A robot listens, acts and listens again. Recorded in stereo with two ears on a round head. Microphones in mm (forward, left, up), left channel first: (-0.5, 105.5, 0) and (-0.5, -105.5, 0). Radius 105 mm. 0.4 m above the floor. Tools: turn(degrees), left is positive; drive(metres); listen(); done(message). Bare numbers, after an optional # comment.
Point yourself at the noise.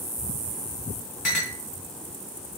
# The clink: about 45° left or 135° left.
turn(45)
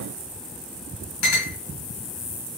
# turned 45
# So it is at 90° left.
turn(90)
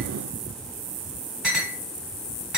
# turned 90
done("Facing the clink.")